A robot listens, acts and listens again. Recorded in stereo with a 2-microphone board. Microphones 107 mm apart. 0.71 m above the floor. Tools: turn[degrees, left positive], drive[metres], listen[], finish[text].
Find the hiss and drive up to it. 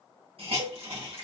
Thought: The hiss: about 70° right or 110° right.
Action: turn[-70]
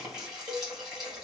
Action: drive[1.0]
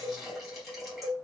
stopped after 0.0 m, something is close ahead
Action: finish[Blocked. The hiss is further on, straight ahead.]